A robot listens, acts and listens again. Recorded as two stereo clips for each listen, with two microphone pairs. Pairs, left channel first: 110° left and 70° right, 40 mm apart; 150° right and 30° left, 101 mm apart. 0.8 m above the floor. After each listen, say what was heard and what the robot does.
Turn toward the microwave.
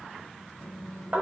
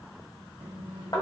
The microwave: 45° left. Turn 45° left.
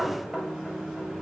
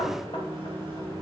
Facing the microwave, 1 to 2 m away.